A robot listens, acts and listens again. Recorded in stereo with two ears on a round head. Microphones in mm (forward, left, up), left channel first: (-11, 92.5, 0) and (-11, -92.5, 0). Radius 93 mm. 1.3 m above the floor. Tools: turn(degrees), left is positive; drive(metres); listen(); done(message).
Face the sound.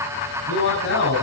turn(degrees=60)
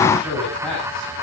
done("Facing the man speaking.")